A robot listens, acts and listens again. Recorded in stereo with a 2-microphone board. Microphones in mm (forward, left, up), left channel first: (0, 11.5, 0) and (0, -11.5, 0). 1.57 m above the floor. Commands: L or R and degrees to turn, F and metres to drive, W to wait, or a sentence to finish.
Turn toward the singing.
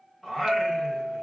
L15
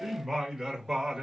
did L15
R25
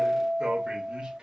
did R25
R35
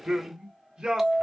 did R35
R30
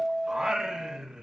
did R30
R30
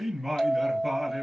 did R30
Found it: singing, straight ahead, 1 to 2 m away.